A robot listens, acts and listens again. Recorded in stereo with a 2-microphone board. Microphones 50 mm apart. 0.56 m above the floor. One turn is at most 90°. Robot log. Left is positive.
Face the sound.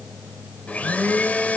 note: The blender: about 35° left or 145° left.
cmd yaw +35
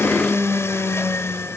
note: So it is at 105° left.
cmd yaw +90
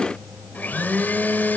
note: The blender is now 40° left.
cmd yaw +40
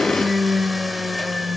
end: Found it: a blender, straight ahead.